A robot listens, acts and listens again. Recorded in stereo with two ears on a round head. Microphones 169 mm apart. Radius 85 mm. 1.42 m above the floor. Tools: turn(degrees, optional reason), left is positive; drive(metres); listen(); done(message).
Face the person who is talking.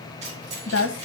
turn(degrees=65, reason="The woman speaking: about 65° left or 115° left.")
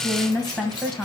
done("Found it: a woman speaking, straight ahead.")